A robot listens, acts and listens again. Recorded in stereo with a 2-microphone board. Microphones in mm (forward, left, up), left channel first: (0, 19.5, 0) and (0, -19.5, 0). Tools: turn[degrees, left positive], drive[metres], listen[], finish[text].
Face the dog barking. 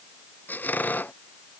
Action: listen[]
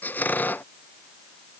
Action: listen[]
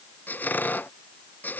Action: finish[I can't make out a dog barking, only a squeak.]